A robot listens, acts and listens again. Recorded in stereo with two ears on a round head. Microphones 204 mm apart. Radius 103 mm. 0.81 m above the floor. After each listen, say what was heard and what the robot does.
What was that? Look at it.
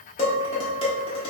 The dishes clattering: about 25° left or 155° left. Turn 25° left.
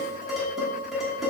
Facing the dishes clattering.